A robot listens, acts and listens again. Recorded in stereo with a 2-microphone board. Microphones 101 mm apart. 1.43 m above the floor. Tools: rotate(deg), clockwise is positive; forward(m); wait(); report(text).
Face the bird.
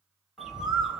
rotate(-30)
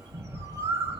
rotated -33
rotate(35)
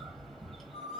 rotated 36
report("Found it: a bird, straight ahead.")